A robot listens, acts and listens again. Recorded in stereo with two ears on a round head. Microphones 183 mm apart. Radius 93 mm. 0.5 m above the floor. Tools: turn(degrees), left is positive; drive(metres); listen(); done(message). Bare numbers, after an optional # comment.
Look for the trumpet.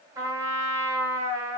# The trumpet: about 15° right or 165° right.
turn(-15)
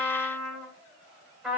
done("Found it: a trumpet, straight ahead.")